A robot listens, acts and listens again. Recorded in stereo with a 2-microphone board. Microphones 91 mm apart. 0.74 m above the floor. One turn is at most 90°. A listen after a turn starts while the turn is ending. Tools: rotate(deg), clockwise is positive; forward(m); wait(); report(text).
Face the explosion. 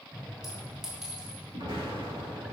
rotate(90)
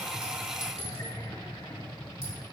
report("Facing where the explosion came from. I can't hear it now.")